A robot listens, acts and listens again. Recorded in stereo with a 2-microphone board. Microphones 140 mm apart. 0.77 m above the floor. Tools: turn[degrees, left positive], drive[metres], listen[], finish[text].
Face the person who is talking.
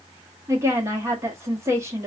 Thought: The woman speaking: about 20° right or 160° right.
Action: turn[-20]
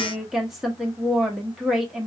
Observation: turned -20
Action: finish[Found it: a woman speaking, straight ahead.]